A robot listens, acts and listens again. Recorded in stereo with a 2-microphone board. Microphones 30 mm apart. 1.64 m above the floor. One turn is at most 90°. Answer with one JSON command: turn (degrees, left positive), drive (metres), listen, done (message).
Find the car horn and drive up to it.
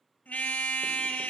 {"turn": 65}
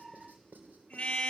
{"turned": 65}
{"turn": 40}
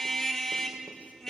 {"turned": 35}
{"drive": 1.0}
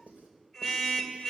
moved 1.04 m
{"drive": 1.0}
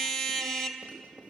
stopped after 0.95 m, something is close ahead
{"done": "I am next to the car horn."}